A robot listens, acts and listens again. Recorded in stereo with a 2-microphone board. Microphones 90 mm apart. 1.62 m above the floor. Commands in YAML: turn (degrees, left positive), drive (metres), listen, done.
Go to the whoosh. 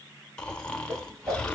turn: -30
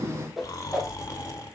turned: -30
drive: 1.0
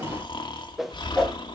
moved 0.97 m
drive: 1.0
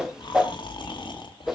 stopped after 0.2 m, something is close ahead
done: "Arrived at the whoosh, straight ahead."